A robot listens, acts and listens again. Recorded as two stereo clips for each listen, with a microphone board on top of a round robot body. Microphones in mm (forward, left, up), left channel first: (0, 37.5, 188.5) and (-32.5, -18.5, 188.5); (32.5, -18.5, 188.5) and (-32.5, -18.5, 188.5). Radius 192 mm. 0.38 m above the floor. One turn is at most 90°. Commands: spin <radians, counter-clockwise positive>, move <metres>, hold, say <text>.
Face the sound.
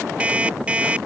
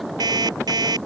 spin 1.57
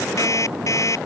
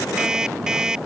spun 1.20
spin 1.57
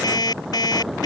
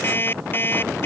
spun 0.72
spin 1.05
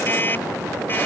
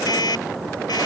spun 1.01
say Found it: an alarm clock, straight ahead.